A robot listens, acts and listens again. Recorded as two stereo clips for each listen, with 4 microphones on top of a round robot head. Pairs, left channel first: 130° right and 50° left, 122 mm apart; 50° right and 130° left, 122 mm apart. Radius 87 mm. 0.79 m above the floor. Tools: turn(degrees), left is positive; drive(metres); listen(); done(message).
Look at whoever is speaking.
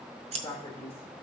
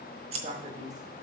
turn(degrees=155)
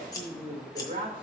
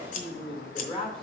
done("Facing the man speaking.")